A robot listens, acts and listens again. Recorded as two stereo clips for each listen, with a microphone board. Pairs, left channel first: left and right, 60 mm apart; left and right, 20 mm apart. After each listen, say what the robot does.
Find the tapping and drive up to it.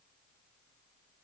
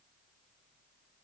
Keep listening.
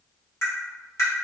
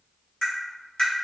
Turn 60° left.
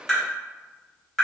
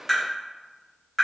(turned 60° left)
Drive 1.0 m forward.
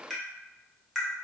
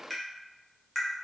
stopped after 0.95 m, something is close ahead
I am next to the tapping.